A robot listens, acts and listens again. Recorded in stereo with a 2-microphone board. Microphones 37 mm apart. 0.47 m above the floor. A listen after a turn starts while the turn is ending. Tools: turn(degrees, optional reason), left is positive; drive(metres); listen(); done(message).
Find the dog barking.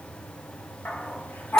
turn(degrees=65, reason="The dog barking: about 65° left or 115° left.")
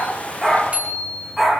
done("Facing the dog barking, over 4 m away.")